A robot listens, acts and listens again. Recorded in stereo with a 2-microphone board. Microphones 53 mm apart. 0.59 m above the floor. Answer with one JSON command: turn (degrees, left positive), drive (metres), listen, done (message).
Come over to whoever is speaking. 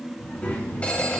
{"turn": 30}
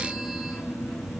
{"turn": 120}
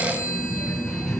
{"turn": 10}
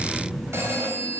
{"drive": 1.0}
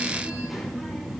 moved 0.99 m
{"drive": 1.0}
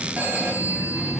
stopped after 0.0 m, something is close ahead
{"done": "Blocked. The child speaking is further on, straight ahead."}